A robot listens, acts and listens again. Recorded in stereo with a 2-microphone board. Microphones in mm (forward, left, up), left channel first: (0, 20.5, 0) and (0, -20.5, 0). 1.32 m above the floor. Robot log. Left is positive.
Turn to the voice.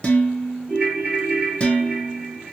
cmd idle
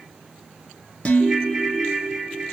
cmd idle
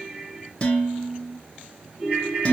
end: I can't make out anyone speaking to turn to.